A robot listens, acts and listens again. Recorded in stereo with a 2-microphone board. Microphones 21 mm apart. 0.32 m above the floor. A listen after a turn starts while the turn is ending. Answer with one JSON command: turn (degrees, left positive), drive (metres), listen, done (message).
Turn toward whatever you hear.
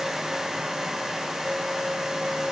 {"listen": true}
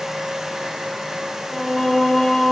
{"turn": 15}
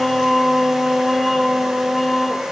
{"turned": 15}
{"done": "Facing the singing."}